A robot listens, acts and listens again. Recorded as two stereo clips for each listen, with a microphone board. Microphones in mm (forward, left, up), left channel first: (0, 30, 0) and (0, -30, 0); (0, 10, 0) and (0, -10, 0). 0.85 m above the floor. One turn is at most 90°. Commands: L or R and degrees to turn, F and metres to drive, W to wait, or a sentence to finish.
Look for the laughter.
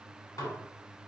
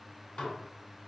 W
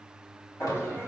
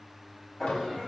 L40
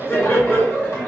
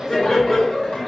L30
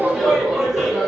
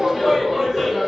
Facing the laughter, 1 to 2 m away.